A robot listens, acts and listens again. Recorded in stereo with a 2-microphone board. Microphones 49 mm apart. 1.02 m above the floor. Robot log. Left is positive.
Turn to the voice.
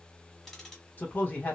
note: The man speaking: about 35° left or 145° left.
cmd yaw +35
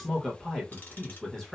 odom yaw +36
end: Facing the man speaking, 1 to 2 m away.